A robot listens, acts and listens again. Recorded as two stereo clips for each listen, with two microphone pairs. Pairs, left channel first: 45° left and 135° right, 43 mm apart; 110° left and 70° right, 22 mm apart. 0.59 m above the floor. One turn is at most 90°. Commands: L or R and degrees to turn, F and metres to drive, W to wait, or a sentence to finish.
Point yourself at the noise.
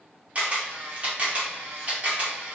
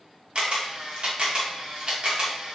R85
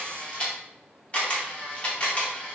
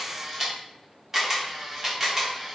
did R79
Facing the camera shutter.